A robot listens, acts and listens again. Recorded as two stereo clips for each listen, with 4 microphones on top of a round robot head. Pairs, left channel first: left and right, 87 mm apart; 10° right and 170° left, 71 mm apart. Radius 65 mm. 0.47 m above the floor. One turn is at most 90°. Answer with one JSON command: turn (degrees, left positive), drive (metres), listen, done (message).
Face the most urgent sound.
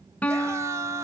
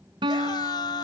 {"turn": -30}
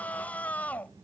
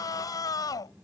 {"turn": 15}
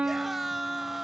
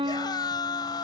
{"done": "Found it: a scream, straight ahead."}